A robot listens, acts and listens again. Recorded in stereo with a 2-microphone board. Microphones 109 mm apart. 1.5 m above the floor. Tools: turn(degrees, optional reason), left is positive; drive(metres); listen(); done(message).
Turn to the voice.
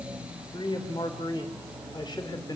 turn(degrees=40, reason="The man speaking: about 40° left or 140° left.")
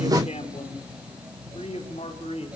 turn(degrees=115, reason="So it is at 115° left.")
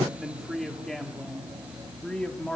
turn(degrees=10, reason="The man speaking is now 10° left.")
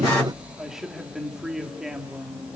done("Facing the man speaking, 2 to 4 m away.")